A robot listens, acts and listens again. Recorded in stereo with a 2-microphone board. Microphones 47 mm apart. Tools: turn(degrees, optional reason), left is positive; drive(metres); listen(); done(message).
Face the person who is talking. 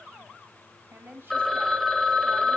turn(degrees=-45, reason="The woman speaking: about 45° right or 135° right.")
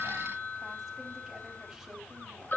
listen()
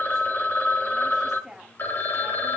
done("Found it: a woman speaking, straight ahead.")